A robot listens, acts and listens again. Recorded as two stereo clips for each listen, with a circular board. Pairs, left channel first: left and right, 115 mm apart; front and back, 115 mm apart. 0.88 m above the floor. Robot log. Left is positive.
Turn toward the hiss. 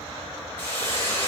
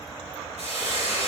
note: The hiss: 160° left.
cmd yaw +160
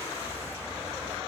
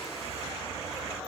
cmd idle
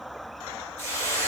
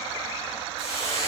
note: The hiss is now 25° left.
cmd yaw +25
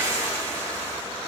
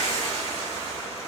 note: The hiss is now 10° left.
cmd yaw +10
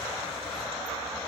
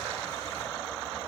cmd idle
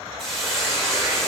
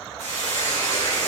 end: Found it: a hiss, straight ahead, 1 to 2 m away.